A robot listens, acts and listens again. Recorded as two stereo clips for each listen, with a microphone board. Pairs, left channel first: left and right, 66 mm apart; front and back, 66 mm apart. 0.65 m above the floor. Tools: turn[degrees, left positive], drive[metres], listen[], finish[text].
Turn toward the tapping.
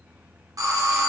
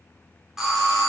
Action: listen[]
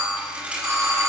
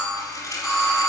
Action: listen[]
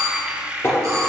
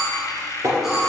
Thought: The tapping: 140° left.
Action: turn[140]
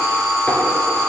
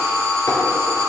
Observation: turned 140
Action: listen[]
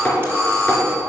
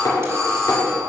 Thought: The tapping is now 20° left.
Action: turn[20]
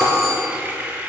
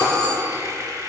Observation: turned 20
Action: listen[]
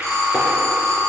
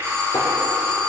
Action: listen[]
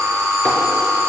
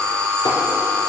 Action: finish[I heard tapping from this way, but can't make it out now.]